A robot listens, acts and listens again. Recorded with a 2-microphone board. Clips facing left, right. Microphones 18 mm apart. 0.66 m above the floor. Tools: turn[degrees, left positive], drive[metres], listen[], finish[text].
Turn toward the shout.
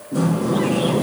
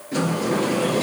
Action: listen[]
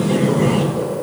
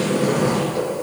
Action: listen[]
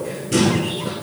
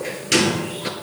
Action: finish[I can't make out a shout, only a sliding door.]